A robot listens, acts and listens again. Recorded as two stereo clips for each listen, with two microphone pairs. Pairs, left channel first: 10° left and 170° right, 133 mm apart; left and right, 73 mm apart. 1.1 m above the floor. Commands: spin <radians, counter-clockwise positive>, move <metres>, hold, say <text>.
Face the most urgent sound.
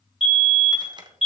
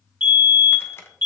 spin -0.52
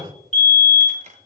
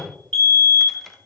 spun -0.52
spin 0.17
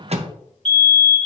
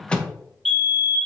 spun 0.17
say Found it: a fire alarm, straight ahead, 2 to 4 m away.